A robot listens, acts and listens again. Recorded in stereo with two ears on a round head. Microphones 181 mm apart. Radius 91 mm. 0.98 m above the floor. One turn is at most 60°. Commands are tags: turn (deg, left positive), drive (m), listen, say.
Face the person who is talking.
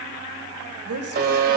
<turn deg="-60"/>
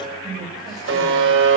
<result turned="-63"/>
<turn deg="-20"/>
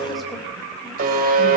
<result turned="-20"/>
<listen/>
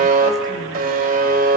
<listen/>
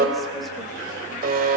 <say>Facing where the woman speaking came from. I can't hear it now.</say>